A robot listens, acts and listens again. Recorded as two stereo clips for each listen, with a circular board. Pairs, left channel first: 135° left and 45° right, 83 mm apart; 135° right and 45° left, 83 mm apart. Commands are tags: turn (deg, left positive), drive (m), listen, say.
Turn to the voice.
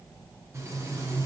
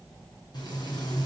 <listen/>
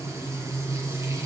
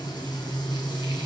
<listen/>
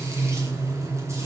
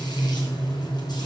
<say>I can't make out anyone speaking, only frying.</say>